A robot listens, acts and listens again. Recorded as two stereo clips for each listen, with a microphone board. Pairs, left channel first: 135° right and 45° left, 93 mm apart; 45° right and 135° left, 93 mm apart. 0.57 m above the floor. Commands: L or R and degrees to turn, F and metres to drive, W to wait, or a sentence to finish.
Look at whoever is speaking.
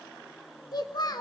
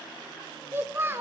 R165
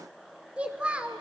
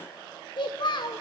R30
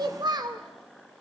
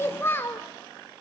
L15
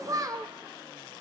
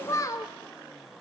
Found it: a child speaking, straight ahead, 1 to 2 m away.